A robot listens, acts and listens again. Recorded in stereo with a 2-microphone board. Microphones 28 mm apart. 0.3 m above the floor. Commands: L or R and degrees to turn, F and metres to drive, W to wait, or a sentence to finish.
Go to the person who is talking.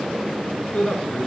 L45
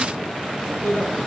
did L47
L85
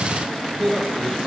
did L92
F1.0
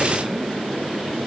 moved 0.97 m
W
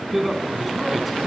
F1.0
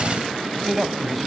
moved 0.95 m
F1.0
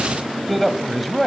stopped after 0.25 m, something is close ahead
I am next to the man speaking.